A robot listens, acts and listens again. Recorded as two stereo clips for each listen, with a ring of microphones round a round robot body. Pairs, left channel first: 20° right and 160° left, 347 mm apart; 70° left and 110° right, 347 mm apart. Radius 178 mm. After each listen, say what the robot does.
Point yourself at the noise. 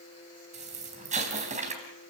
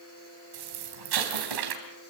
Turn 135° right.
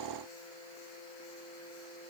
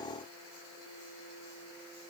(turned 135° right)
Facing where the explosion came from. I can't hear it now.